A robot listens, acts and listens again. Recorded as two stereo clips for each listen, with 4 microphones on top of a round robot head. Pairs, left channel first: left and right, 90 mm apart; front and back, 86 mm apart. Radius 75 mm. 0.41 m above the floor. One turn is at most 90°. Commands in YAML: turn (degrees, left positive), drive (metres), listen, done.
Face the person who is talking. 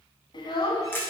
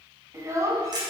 turn: 90
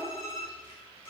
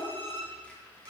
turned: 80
turn: 60
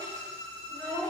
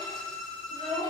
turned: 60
turn: 10
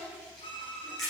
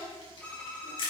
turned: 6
listen: true
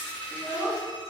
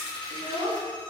turn: 10
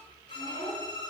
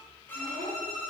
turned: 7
done: "Found it: a child speaking, straight ahead, 2 to 4 m away."